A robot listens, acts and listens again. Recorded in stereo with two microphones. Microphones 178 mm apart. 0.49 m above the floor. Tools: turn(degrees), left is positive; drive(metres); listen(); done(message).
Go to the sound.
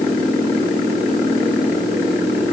listen()
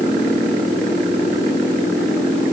listen()
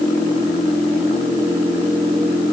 done("I can't make out anything to turn to.")